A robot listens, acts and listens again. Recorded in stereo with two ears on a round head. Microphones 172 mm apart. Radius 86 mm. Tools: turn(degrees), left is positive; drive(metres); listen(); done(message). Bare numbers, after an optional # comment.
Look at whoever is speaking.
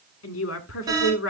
turn(90)
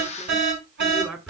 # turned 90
# So it is at 10° right.
turn(-10)
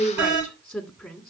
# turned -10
done("Facing the woman speaking, 2 to 4 m away.")